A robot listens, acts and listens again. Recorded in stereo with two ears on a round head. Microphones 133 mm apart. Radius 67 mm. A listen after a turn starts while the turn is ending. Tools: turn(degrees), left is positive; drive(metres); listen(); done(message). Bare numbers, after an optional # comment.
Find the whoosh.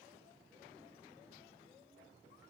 listen()
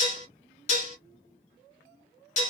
listen()
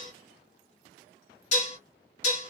done("I can't make out a whoosh to turn to.")